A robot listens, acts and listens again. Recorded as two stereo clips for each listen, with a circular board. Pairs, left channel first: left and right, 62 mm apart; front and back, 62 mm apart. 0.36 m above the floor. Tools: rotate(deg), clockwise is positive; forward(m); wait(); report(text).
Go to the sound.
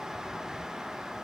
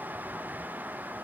wait()
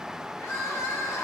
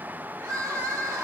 rotate(-140)
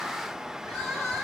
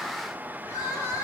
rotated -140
rotate(-10)
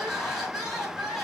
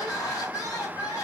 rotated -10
forward(1.0)
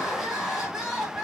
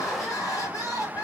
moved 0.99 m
forward(1.0)
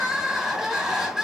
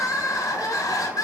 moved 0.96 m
forward(1.0)
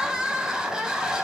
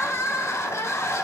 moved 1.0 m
rotate(10)
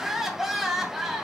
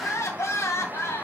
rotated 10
forward(1.0)
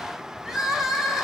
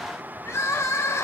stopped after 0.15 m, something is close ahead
report("Arrived at the crying, straight ahead.")